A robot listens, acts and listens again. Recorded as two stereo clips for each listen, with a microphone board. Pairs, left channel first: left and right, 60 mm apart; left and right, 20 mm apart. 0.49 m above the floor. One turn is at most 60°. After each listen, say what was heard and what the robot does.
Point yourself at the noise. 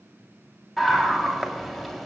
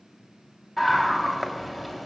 Turn 30° left.
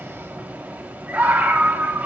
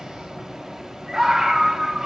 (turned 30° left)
So it is at 30° right. Turn 30° right.
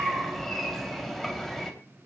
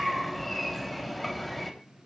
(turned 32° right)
Facing the scream, 2 to 4 m away.